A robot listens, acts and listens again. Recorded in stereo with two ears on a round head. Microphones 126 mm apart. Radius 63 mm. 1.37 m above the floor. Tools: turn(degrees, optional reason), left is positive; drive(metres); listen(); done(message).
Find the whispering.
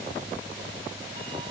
listen()
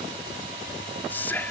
turn(degrees=30)
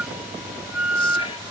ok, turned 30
listen()
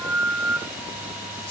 listen()
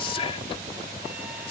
turn(degrees=135, reason="So it is at 135° left.")
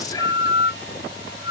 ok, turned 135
turn(degrees=25, reason="The whispering is now 25° left.")
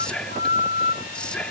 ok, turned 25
done("Found it: whispering, straight ahead.")